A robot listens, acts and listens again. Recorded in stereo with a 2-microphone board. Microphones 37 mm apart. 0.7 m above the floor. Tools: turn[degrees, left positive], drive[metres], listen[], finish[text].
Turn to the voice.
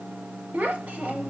Thought: The child speaking: about 50° right or 130° right.
Action: turn[-50]
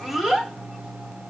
Action: finish[Facing the child speaking.]